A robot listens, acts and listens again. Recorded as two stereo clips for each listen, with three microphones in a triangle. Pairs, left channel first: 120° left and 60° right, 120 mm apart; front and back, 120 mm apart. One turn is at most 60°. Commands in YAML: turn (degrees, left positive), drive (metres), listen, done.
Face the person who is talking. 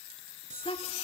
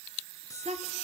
turn: 60
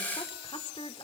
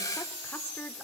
turn: 60
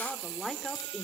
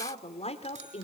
turn: 30
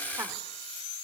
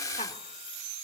listen: true
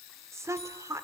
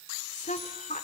done: "Found it: a woman speaking, straight ahead, 2 to 4 m away."